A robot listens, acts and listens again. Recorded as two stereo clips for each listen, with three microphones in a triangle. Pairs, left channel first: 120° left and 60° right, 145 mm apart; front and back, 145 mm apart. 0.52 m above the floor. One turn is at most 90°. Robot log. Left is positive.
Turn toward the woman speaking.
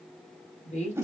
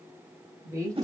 note: The woman speaking: 115° left.
cmd yaw +90
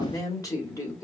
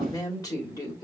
note: The woman speaking is now 55° left.
cmd yaw +55
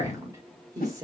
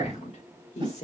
end: Found it: a woman speaking, straight ahead, 1 to 2 m away.